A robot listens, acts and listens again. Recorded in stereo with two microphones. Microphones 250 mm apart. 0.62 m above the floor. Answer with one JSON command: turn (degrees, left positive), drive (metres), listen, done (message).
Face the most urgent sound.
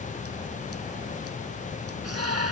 {"turn": -90}
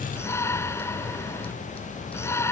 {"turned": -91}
{"turn": 10}
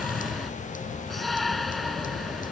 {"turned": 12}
{"done": "Found it: a shout, straight ahead."}